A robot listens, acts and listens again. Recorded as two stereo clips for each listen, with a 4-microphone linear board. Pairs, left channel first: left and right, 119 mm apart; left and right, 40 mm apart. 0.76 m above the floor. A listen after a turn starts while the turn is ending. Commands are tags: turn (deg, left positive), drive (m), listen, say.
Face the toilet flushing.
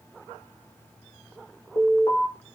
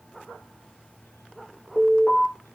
<listen/>
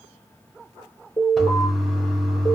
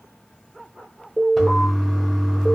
<turn deg="30"/>
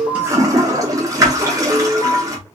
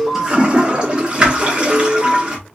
<turn deg="-30"/>
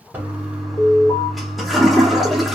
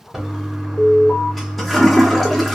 <say>Found it: a toilet flushing, straight ahead.</say>